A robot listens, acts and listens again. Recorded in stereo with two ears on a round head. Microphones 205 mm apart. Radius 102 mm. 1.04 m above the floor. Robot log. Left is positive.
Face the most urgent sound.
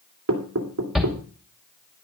cmd yaw +30
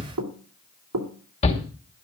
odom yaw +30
note: So it is at 150° left.
cmd yaw +150
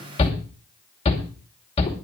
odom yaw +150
note: The shout is now 30° left.
cmd yaw +30
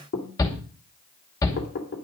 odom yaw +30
note: The shout is now 15° left.
cmd yaw +15
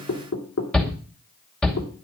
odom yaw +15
end: Facing the shout, 2 to 4 m away.